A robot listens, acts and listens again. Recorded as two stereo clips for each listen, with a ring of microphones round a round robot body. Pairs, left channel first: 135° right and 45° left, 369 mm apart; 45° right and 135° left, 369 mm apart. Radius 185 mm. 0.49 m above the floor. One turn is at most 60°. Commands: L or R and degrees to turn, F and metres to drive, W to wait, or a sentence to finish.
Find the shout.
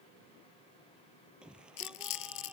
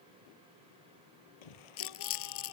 R45
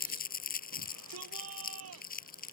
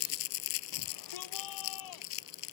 R10
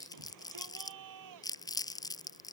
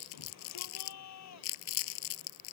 Found it: a shout, straight ahead.